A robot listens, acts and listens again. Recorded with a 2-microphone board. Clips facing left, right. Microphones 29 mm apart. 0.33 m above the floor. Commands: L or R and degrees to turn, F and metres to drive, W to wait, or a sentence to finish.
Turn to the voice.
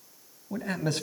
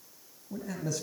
L60
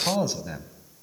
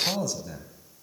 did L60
L35
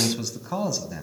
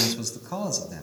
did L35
L15
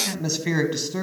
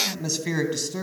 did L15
L15
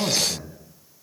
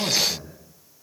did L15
Facing the man speaking.